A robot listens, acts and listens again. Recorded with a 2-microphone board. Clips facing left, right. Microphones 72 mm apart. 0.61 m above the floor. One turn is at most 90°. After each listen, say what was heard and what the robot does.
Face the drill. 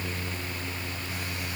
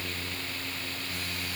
Keep listening.
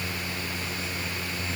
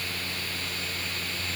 Keep listening.
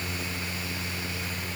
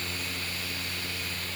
I can't make out a drill to turn to.